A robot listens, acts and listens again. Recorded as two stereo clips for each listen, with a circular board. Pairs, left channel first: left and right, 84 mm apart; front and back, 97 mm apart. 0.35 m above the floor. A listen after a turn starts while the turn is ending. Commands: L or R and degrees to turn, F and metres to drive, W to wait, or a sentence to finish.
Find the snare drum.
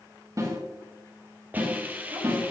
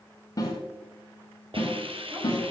R45
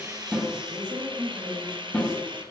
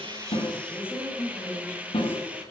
Found it: a snare drum, straight ahead, 2 to 4 m away.